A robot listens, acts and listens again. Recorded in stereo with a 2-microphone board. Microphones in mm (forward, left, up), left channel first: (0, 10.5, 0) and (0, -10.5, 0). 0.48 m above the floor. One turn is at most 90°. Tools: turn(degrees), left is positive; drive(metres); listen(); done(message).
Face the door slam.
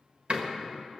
turn(degrees=-55)
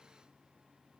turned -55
listen()
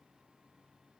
done("I heard a door slam, but can't make it out now. It was about straight ahead or 70° right.")